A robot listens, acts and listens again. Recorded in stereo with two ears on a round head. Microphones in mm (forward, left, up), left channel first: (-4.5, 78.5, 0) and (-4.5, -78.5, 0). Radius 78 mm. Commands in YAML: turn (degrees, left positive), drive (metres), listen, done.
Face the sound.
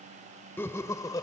turn: 25
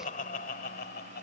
turn: 120
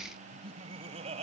turn: -40
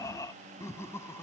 turn: 15
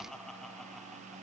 done: "Found it: laughter, straight ahead."